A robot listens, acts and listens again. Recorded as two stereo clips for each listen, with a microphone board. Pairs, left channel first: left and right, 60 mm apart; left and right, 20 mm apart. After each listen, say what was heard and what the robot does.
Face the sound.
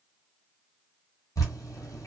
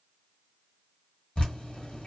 The dripping: about 75° left or 105° left. Turn 75° left.
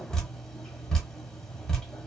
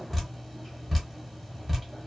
So it is at 10° left. Turn 10° left.
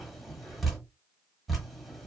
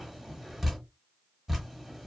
Facing the dripping, 1 to 2 m away.